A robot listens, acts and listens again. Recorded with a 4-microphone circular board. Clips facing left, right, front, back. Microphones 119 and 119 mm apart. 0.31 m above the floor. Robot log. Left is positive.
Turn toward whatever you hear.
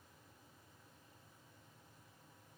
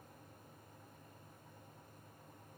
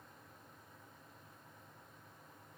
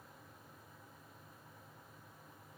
cmd idle
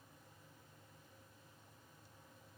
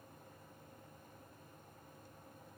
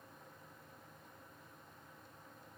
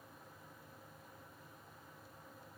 cmd idle
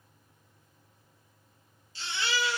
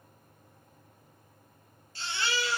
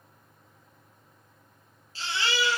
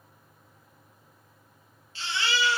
note: The baby crying: 55° right.
cmd yaw -55
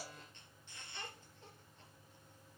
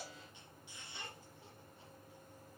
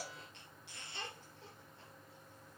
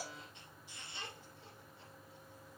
note: The baby crying is now 10° right.
cmd yaw -10
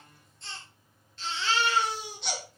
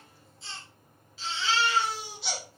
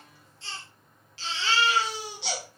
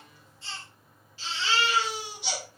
end: Facing the baby crying, 2 to 4 m away.